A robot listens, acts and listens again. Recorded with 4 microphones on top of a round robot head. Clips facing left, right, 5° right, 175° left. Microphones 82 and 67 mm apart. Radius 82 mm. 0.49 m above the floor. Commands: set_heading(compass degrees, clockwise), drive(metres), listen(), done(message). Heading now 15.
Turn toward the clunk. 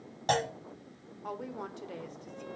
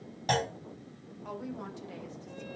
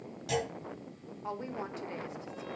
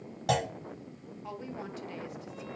set_heading(225)
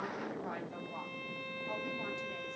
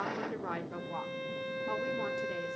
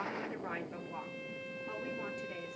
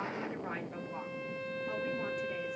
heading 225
done("I heard a clunk from this way, but can't make it out now.")